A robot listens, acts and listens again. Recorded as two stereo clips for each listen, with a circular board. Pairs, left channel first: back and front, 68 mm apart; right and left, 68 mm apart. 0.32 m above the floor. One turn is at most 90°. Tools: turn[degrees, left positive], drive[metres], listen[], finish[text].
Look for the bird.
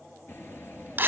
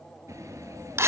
Thought: The bird: 125° left.
Action: turn[90]
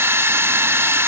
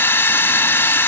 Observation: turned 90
Thought: Nothing new. It was at 35° left.
Action: turn[35]
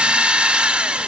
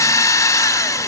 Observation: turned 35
Action: listen[]
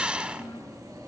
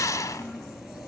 Action: finish[Facing the bird.]